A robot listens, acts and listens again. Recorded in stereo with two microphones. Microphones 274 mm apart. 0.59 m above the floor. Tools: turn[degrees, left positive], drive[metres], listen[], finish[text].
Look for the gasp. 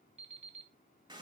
Action: listen[]
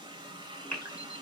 Action: turn[-90]
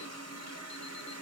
Action: finish[Facing where the gasp came from. I can't hear it now.]